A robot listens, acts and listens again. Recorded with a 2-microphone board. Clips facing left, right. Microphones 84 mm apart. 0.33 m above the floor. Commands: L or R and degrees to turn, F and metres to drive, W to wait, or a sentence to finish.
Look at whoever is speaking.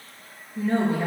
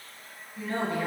L30
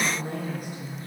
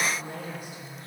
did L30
L130
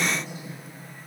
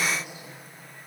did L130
R10
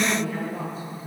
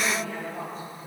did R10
Facing the woman speaking.